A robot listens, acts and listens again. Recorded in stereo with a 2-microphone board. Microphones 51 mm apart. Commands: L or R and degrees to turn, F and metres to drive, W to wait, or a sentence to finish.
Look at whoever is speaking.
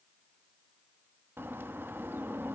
W
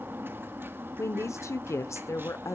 L65
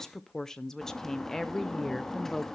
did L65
L10
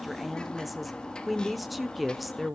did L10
Facing the woman speaking.